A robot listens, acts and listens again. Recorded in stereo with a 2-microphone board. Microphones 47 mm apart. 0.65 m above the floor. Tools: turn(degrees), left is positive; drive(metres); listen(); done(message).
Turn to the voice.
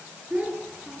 turn(degrees=-30)
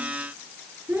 turn(degrees=-125)
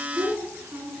turn(degrees=-60)
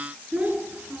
turn(degrees=-35)
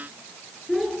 done("Facing the child speaking, over 4 m away.")